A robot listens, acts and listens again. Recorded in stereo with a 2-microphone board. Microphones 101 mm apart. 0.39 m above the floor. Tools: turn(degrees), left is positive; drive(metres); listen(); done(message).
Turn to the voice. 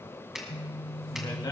turn(degrees=50)
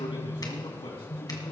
turn(degrees=65)
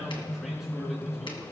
listen()
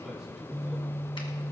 done("Facing the man speaking, over 4 m away.")